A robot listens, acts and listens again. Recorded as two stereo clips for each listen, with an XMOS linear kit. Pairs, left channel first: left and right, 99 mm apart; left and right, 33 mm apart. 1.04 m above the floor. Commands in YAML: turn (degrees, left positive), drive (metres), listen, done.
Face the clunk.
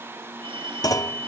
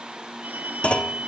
turn: 40
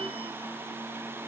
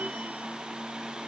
listen: true
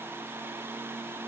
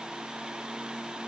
done: "I heard a clunk, but can't make it out now. It was about straight ahead or 100° left."